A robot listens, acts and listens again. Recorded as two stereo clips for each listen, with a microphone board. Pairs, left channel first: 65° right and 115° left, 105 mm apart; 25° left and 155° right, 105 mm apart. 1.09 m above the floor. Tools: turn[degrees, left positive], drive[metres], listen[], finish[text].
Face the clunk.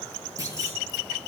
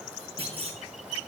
Thought: The clunk: 170° left.
Action: turn[170]
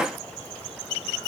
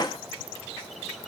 Action: finish[I heard a clunk from this way, but can't make it out now.]